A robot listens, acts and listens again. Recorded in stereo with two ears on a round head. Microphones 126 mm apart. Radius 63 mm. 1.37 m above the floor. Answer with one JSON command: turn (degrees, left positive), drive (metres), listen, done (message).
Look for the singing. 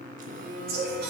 {"turn": -75}
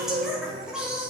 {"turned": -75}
{"done": "Found it: singing, straight ahead, 2 to 4 m away."}